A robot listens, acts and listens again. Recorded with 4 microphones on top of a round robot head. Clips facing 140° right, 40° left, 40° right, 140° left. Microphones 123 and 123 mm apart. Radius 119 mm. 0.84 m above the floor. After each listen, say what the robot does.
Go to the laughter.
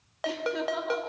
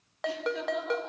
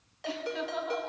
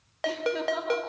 Turn 175° right.
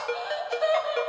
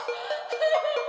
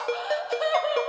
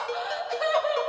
Turn 35° left.
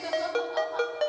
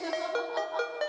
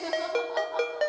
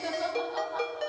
Drive 1.0 m forward.
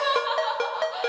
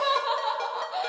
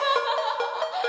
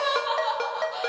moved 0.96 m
Turn 10° right.
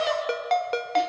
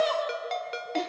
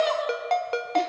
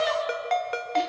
Drive 1.0 m forward.
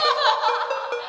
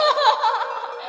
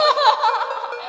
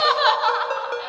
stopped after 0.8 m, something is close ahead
Arrived at the laughter, straight ahead.